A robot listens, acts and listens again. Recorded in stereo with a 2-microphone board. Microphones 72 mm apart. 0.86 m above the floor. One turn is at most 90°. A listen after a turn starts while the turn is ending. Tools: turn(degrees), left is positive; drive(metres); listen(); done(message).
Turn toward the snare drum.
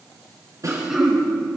turn(degrees=-50)
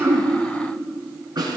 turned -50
turn(degrees=-80)
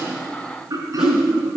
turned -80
listen()
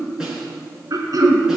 listen()
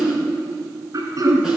done("Facing where the snare drum came from. I can't hear it now.")